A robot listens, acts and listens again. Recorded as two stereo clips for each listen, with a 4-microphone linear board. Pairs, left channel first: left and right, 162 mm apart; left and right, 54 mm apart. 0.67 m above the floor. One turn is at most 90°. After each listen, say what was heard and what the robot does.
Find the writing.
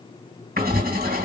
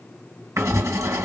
The writing: about 70° right or 110° right. Turn 70° right.
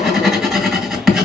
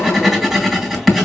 Found it: writing, straight ahead, 2 to 4 m away.